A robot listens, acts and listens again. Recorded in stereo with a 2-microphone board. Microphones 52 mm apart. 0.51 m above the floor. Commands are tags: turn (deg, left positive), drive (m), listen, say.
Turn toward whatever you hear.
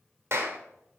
<turn deg="-60"/>
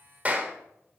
<turn deg="-30"/>
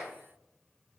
<listen/>
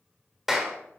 <say>Found it: a clap, straight ahead, 1 to 2 m away.</say>